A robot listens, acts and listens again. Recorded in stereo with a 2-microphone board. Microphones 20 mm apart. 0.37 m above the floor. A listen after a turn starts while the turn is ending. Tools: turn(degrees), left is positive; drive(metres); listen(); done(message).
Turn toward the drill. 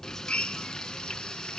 turn(degrees=60)
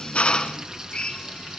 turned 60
turn(degrees=55)
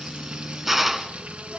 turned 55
done("Facing the drill.")